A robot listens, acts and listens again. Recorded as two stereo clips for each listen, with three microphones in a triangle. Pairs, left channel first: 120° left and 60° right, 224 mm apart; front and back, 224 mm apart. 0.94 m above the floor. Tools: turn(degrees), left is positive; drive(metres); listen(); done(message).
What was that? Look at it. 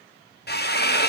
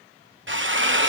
turn(degrees=155)
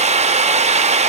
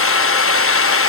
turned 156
done("Facing the drill.")